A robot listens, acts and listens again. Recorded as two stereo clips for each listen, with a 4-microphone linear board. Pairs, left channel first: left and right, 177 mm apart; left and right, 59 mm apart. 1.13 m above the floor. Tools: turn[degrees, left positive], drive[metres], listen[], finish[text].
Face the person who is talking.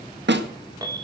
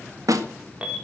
Action: listen[]
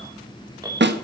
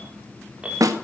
Action: listen[]
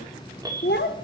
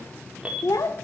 Thought: The child speaking: about 75° left or 105° left.
Action: turn[75]
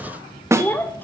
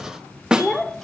Thought: So it is at 10° left.
Action: turn[10]
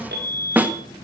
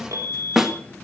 Action: listen[]
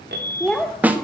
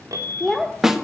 Action: finish[Found it: a child speaking, straight ahead, 1 to 2 m away.]